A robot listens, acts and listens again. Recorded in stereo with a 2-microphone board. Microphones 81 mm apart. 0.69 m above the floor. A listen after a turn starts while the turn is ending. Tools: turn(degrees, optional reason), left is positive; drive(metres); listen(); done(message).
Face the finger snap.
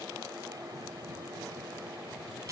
listen()
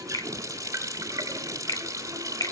turn(degrees=55, reason="The finger snap: about 55° left or 125° left.")
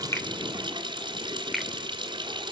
done("Facing the finger snap.")